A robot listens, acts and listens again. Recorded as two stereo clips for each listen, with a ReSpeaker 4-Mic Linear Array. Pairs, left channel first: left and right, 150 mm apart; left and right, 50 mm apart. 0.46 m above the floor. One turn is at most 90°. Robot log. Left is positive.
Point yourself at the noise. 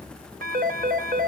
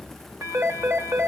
note: The phone ringing: about 70° right or 110° right.
cmd yaw -70
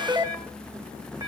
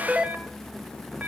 note: So it is at 20° right.
cmd yaw -20
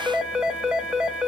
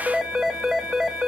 end: Found it: a phone ringing, straight ahead.